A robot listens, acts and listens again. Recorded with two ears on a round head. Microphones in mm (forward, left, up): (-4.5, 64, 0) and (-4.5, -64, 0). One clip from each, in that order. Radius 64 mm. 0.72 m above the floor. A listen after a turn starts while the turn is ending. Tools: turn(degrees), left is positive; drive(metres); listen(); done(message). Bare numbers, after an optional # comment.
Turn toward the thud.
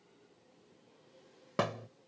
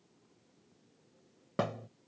# The thud: about 40° left or 140° left.
turn(40)
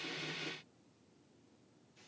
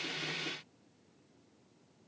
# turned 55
listen()
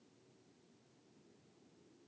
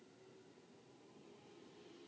done("I heard a thud, but can't make it out now. It was about 15° right or 85° left.")